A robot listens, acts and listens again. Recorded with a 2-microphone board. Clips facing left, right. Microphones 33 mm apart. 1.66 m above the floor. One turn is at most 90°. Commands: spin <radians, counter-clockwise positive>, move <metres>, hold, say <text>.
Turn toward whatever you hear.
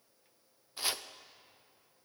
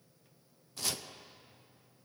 spin 0.35
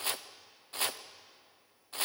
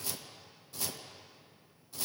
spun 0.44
spin 1.57
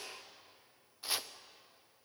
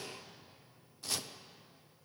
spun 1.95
spin 0.35
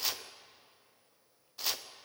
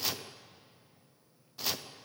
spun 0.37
say Found it: chopping, straight ahead, under 1 m away.